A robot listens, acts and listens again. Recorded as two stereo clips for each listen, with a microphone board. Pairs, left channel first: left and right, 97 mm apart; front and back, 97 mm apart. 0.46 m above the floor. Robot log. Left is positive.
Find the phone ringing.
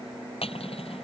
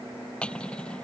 cmd idle
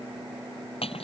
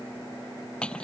cmd idle
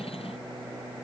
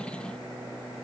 end: I can't make out a phone ringing to turn to.